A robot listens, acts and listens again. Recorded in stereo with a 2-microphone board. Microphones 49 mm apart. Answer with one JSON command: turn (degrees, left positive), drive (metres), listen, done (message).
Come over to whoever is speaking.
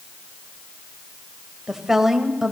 {"turn": -30}
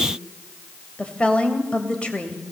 {"turn": 25}
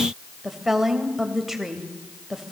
{"drive": 1.0}
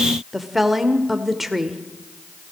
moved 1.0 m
{"drive": 1.0}
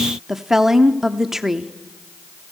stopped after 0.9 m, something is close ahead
{"done": "I am next to the woman speaking."}